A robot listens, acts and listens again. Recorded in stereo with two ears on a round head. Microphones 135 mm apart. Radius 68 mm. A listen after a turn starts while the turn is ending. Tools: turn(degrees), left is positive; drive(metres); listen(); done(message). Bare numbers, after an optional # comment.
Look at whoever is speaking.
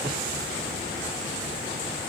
listen()
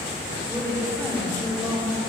turn(30)
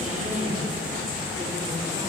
# So it is at 20° right.
turn(-20)
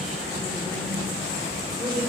done("Facing the woman speaking, over 4 m away.")